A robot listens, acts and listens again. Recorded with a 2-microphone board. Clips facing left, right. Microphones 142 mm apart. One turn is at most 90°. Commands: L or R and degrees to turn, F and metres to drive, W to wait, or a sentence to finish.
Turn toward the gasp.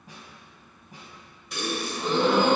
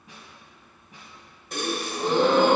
R45
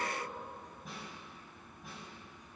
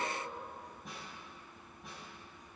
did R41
W
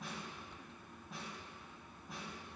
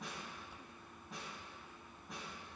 I heard a gasp, but can't make it out now. It was about 5° right or 95° right.